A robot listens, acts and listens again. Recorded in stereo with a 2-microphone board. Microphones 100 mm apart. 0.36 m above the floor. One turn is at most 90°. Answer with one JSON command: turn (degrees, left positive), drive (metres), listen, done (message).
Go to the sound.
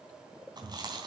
{"turn": -45}
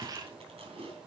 {"turn": -90}
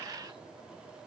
{"listen": true}
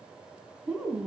{"turn": -10}
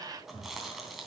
{"drive": 1.0}
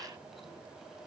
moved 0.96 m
{"listen": true}
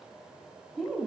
{"drive": 1.0}
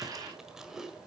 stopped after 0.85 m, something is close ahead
{"done": "Arrived at the chewing, straight ahead."}